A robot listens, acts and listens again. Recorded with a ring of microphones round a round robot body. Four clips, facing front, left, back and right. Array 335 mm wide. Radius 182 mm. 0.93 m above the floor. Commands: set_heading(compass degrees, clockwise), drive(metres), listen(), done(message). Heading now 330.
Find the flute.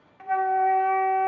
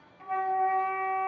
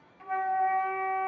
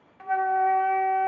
set_heading(20)
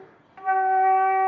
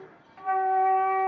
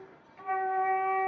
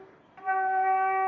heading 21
done("Found it: a flute, straight ahead.")